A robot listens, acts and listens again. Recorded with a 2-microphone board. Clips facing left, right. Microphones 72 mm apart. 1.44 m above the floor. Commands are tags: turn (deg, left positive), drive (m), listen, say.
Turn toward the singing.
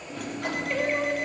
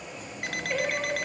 <turn deg="-30"/>
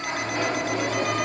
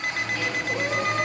<listen/>
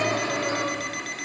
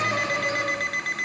<turn deg="-140"/>
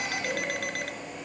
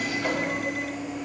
<listen/>
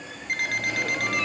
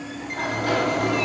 <listen/>
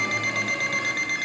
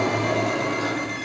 <say>I heard singing from this way, but can't make it out now.</say>